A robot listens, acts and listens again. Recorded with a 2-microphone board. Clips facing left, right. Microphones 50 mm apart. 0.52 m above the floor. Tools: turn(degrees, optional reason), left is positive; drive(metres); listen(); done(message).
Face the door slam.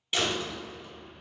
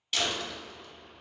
turn(degrees=20, reason="The door slam: about 20° left or 160° left.")
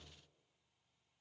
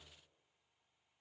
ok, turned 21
listen()
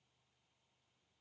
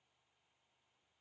done("I heard a door slam, but can't make it out now. It was about straight ahead or 140° left.")